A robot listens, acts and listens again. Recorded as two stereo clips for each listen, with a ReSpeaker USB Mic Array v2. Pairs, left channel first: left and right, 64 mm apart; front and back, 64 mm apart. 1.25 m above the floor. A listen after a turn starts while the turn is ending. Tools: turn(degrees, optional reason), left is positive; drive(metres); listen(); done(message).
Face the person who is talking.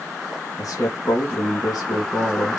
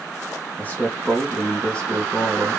turn(degrees=85, reason="The man speaking: 85° left.")
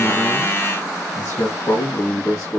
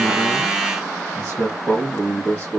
turn(degrees=45, reason="The man speaking is now 45° left.")
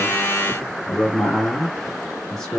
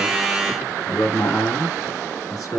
done("Found it: a man speaking, straight ahead, 2 to 4 m away.")